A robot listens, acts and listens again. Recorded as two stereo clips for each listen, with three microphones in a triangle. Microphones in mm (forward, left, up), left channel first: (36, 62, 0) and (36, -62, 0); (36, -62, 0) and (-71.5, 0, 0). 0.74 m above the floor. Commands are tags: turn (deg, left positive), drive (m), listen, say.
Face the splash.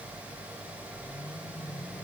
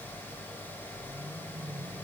<listen/>
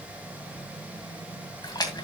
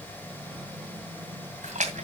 <turn deg="145"/>
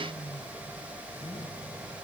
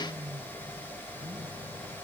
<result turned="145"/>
<say>Facing where the splash came from. I can't hear it now.</say>